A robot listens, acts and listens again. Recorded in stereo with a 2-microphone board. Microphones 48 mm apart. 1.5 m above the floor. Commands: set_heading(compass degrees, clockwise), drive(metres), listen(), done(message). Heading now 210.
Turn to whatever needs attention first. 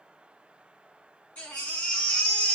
set_heading(185)
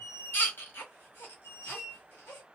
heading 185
set_heading(60)
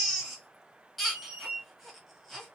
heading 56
done("Found it: a baby crying, straight ahead.")